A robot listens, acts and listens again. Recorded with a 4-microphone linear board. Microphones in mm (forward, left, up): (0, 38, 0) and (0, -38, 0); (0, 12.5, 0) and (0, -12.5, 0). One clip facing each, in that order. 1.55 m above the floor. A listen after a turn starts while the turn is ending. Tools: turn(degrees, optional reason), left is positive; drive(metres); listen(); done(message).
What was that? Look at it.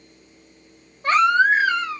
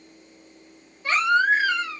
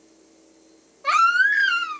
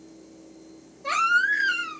turn(degrees=50, reason="The baby crying: about 50° left or 130° left.")
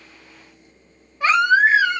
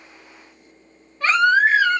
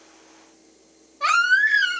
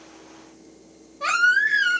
turn(degrees=15, reason="So it is at 15° left.")
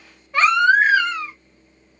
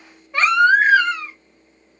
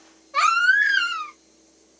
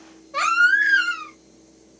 done("Found it: a baby crying, straight ahead, 1 to 2 m away.")